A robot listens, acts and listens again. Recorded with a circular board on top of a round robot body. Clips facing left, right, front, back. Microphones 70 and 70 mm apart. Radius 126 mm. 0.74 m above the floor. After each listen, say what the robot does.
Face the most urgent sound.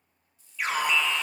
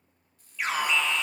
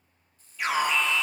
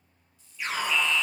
Found it: an alarm, straight ahead, 2 to 4 m away.